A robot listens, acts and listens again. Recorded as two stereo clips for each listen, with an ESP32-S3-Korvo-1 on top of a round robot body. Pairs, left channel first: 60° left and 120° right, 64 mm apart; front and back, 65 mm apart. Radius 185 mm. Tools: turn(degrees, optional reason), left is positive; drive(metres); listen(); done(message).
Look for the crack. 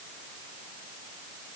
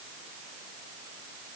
listen()
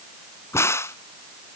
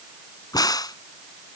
turn(degrees=15, reason="The crack: 15° left.")
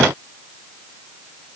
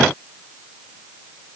done("Facing where the crack came from. I can't hear it now.")